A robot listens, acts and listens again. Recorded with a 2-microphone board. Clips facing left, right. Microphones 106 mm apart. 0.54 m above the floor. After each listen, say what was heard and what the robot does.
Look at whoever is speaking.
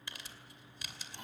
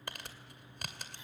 Keep listening.
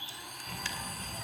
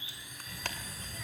The child speaking: about 25° left or 155° left. Turn 25° left.
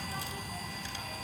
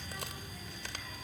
So it is at 130° left. Turn 130° left.
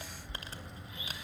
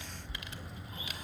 Found it: a child speaking, straight ahead, 2 to 4 m away.